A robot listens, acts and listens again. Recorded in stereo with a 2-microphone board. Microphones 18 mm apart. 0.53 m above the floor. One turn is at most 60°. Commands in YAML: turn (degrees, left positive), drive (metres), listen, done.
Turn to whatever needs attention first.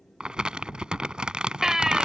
turn: -35
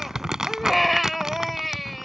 done: "Found it: a baby crying, straight ahead."